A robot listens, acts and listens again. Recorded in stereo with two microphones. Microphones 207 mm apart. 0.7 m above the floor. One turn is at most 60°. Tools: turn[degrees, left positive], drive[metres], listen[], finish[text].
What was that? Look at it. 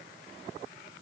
Action: listen[]
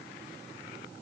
Action: listen[]
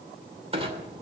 Thought: The clunk: about 30° right or 150° right.
Action: turn[-30]
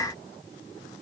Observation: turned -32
Action: listen[]
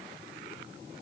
Action: finish[I heard a clunk, but can't make it out now. It was about 5° left or 120° right.]